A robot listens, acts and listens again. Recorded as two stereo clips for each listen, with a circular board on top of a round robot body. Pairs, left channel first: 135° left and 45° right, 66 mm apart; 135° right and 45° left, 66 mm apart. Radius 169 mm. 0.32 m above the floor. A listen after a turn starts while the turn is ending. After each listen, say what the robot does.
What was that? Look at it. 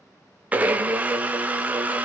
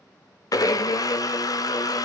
Turn 110° right.
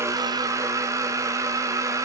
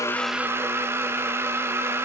Turn 10° right.
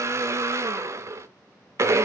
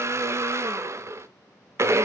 Facing the blender, under 1 m away.